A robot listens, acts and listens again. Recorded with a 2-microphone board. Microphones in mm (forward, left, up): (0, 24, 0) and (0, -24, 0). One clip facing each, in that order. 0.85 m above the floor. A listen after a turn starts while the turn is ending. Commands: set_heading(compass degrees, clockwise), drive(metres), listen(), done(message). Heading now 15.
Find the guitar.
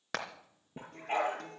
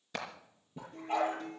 set_heading(315)
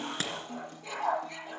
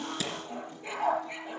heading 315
set_heading(255)
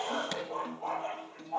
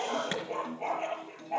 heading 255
set_heading(245)
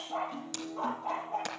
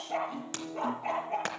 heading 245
done("Found it: a guitar, straight ahead, over 4 m away.")